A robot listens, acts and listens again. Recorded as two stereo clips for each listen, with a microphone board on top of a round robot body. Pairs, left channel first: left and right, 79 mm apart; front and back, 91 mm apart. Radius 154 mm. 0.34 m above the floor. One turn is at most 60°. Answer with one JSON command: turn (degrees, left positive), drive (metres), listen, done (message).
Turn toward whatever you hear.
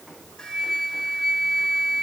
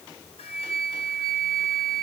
{"turn": 10}
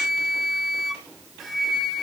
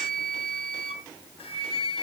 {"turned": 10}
{"done": "Found it: a flute, straight ahead, 1 to 2 m away."}